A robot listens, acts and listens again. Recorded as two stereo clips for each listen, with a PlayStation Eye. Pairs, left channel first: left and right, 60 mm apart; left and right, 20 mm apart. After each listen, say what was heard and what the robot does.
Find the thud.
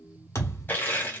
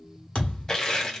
The thud: about 55° left or 125° left. Turn 55° left.
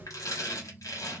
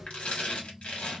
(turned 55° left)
Keep listening.
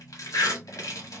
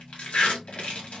I heard a thud, but can't make it out now. It was about straight ahead or 70° left.